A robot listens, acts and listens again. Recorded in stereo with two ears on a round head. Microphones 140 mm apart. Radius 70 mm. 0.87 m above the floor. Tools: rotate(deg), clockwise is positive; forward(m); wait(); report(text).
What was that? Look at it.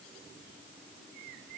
wait()
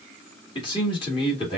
rotate(-35)
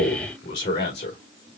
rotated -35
rotate(-110)
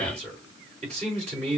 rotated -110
rotate(40)
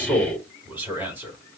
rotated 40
rotate(10)
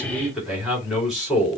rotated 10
report("Facing the man speaking.")